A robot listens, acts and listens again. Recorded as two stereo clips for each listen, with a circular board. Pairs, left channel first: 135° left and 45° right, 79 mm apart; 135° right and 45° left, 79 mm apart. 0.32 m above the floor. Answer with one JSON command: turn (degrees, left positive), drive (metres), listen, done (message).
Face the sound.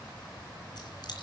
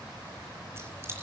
{"turn": 105}
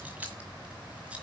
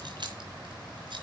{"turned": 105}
{"turn": 25}
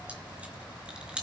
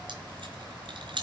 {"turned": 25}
{"turn": 30}
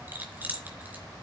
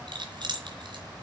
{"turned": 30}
{"turn": 25}
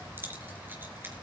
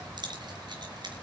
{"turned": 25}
{"turn": 20}
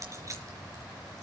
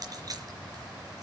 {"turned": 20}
{"done": "Facing the keys jangling, 2 to 4 m away."}